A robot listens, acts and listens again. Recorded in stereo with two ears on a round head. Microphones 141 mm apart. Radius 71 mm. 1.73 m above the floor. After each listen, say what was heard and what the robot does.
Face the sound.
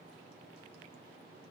Keep listening.
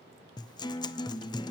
The guitar: about 30° left or 150° left. Turn 30° left.
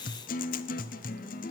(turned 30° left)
So it is at 120° left. Turn 120° left.
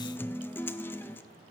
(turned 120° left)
The guitar is now 15° left. Turn 15° left.
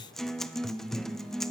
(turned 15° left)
Facing the guitar.